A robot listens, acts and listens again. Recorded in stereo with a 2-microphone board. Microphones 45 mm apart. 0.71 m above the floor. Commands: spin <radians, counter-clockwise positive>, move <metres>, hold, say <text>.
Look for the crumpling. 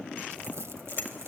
spin -1.57
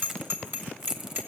spin -0.17
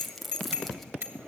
say Found it: crumpling, straight ahead.